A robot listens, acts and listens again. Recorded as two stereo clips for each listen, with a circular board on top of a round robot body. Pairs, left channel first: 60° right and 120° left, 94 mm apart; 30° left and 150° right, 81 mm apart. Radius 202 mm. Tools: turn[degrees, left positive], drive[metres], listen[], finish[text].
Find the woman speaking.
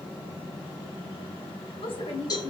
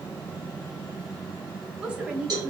Thought: The woman speaking: 75° right.
Action: turn[-75]
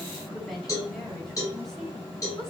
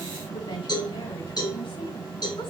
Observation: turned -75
Action: listen[]
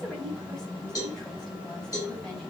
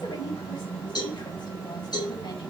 Action: listen[]
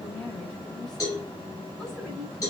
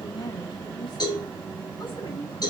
Thought: The woman speaking is now 25° left.
Action: turn[25]
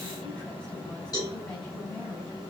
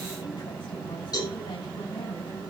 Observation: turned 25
Action: listen[]
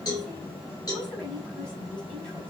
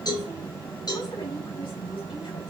Thought: The woman speaking is now 20° left.
Action: turn[20]
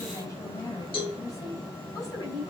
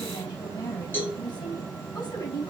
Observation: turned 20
Action: finish[Found it: a woman speaking, straight ahead, over 4 m away.]